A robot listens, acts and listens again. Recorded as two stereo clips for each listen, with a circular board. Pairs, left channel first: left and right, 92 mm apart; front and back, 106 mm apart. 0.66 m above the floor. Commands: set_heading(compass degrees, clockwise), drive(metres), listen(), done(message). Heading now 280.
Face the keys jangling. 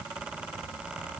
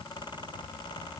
listen()
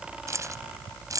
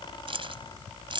set_heading(60)
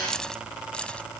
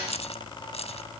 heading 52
set_heading(42)
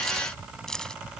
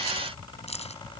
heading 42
done("Found it: keys jangling, straight ahead.")